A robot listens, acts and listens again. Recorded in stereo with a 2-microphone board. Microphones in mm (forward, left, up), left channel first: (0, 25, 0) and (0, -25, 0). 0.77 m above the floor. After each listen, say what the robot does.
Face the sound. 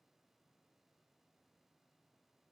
Keep listening.
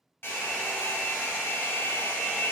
Turn 50° left.
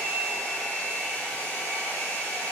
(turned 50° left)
Turn 65° left.
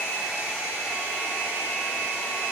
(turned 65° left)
Turn 30° right.
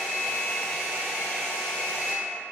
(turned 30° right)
Turn 10° left.
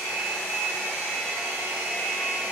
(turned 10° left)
Found it: a hair dryer, straight ahead.